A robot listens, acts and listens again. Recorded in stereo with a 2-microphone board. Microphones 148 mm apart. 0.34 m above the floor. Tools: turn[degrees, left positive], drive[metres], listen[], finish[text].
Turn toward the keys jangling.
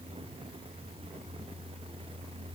Action: listen[]
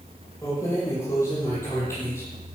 Thought: The keys jangling: about 15° left or 165° left.
Action: turn[15]
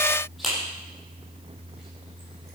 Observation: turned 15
Action: turn[30]
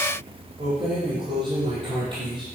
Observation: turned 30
Thought: So it is at 30° right.
Action: turn[-30]
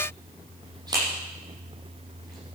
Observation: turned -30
Thought: The keys jangling is now 25° right.
Action: turn[-25]
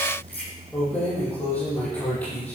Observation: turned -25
Thought: The keys jangling is now 10° left.
Action: turn[10]
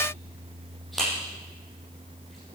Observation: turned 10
Action: finish[Found it: keys jangling, straight ahead.]